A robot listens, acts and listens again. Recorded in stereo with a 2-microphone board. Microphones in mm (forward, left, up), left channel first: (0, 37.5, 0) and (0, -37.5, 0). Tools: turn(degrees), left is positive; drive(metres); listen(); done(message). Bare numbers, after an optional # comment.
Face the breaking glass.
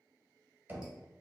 listen()
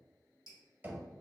listen()
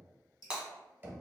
turn(-30)
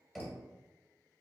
listen()
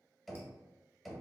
done("I heard breaking glass, but can't make it out now. It was about 15° left or 135° right.")